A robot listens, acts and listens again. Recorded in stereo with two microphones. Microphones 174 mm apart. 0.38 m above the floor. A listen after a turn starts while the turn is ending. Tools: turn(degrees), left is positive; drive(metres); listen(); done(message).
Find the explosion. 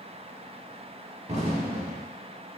turn(degrees=-40)
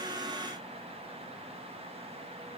listen()
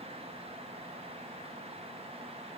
done("I heard an explosion, but can't make it out now. It was about straight ahead or 100° right.")